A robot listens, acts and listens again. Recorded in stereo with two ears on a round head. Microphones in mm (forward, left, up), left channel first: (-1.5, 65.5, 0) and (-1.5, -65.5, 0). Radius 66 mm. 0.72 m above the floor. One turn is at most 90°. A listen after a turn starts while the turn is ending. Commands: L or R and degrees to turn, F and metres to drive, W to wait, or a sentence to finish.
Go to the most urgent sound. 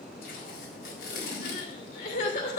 L65
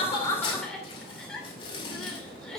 F1.0
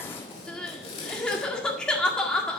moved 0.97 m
F1.0
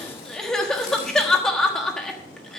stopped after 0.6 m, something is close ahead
I am next to the crying.